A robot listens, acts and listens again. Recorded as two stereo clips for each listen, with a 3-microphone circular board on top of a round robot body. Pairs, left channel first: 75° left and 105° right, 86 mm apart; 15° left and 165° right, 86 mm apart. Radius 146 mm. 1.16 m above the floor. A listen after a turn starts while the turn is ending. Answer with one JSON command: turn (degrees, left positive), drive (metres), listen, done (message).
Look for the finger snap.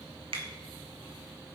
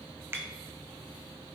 {"turn": -100}
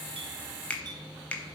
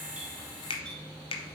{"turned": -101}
{"done": "Found it: a finger snap, straight ahead."}